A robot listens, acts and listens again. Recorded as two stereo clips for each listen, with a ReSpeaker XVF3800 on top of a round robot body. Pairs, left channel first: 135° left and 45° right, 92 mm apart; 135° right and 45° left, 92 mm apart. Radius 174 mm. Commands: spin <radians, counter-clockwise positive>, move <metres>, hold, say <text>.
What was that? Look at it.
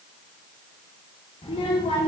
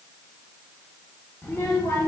spin 2.71
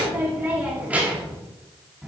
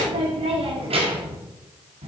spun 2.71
spin 0.87
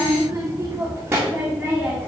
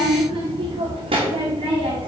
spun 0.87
spin 0.70
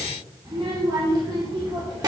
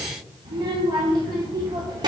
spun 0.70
spin 0.35
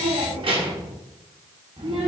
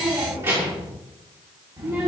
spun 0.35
say Found it: a child speaking, straight ahead.